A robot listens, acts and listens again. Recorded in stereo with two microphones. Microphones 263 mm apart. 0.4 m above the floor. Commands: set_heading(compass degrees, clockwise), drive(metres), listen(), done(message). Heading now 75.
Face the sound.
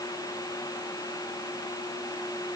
listen()
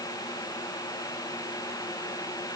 listen()
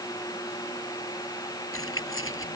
set_heading(25)
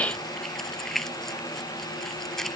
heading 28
done("Found it: keys jangling, straight ahead.")